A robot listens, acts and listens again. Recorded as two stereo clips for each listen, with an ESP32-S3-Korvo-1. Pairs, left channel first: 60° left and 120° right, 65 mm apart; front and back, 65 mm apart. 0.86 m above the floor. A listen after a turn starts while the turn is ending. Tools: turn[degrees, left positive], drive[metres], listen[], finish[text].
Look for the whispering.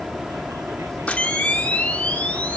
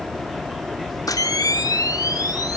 Action: listen[]
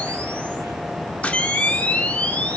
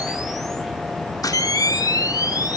Action: listen[]
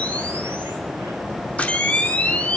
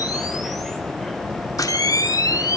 Action: finish[I can't make out whispering to turn to.]